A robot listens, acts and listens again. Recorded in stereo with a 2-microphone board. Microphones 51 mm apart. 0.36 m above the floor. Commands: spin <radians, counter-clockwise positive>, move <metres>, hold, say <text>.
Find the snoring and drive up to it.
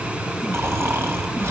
spin -0.96
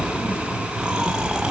spin -0.26
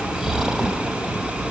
spin -0.17
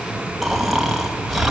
move 1.0
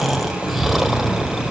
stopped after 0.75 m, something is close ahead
say I am next to the snoring.